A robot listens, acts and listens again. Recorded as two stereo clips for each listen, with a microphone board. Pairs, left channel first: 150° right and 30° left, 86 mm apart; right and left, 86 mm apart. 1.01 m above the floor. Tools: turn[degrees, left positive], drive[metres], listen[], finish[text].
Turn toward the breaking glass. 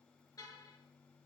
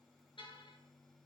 Action: listen[]
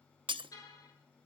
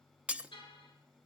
Thought: The breaking glass: 15° left.
Action: turn[15]
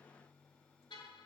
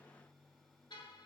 Action: finish[Facing where the breaking glass came from. I can't hear it now.]